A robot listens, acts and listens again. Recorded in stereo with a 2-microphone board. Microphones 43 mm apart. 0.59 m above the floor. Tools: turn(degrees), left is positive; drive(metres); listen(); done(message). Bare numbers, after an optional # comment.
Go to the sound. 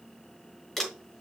turn(30)
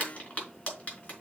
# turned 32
# So it is at 150° left.
turn(150)
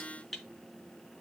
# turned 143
drive(1.0)
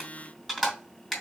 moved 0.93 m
drive(1.0)
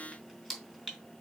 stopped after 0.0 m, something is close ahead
done("Blocked. The crumpling is further on, straight ahead.")